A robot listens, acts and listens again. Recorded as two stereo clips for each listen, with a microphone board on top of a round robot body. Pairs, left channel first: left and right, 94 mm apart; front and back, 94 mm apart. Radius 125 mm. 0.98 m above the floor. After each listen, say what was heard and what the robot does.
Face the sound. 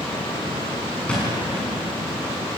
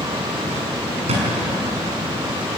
The thud: 170° left. Turn 170° left.
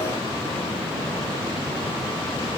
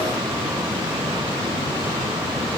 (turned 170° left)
I heard a thud from this way, but can't make it out now.